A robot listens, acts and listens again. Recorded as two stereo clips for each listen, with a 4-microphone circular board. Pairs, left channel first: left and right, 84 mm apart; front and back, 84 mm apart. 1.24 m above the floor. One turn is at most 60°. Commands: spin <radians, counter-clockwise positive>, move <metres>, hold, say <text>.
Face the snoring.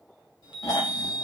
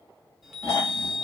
spin 0.87
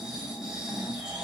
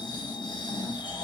spin -0.17
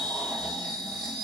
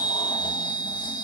hold
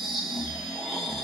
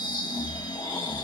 say Found it: snoring, straight ahead.